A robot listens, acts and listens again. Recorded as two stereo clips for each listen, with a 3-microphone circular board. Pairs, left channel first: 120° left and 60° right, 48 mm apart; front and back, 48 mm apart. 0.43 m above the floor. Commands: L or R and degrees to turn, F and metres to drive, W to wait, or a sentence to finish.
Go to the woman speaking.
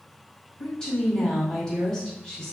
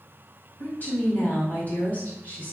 L45
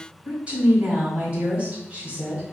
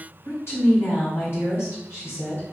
F1.0
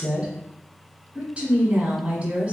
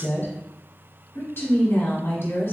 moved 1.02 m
R10
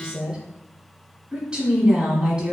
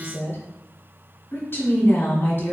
F1.0
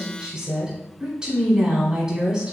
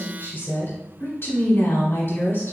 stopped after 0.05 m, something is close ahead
I am next to the woman speaking.